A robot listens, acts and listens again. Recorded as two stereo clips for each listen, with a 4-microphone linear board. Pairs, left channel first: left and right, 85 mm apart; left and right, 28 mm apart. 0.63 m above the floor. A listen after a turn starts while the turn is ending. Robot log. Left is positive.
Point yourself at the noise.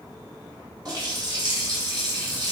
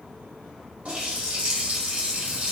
note: The running tap: about 50° right or 130° right.
cmd yaw -50
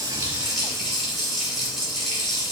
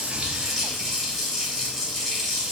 end: Facing the running tap, 1 to 2 m away.